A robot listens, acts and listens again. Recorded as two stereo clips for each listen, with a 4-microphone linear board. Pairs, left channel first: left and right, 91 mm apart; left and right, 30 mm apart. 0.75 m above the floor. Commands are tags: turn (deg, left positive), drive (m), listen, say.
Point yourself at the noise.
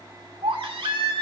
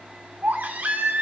<turn deg="-70"/>
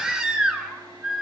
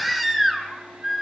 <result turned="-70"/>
<turn deg="-10"/>
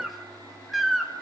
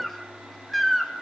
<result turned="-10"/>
<say>Found it: a baby crying, straight ahead.</say>